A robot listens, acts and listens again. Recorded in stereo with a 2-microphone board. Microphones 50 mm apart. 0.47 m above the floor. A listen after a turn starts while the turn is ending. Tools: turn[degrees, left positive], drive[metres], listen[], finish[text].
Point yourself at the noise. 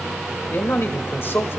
Thought: The man speaking: about 50° left or 130° left.
Action: turn[50]
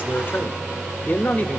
Thought: So it is at 35° left.
Action: turn[35]
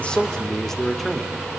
Action: finish[Found it: a man speaking, straight ahead, 1 to 2 m away.]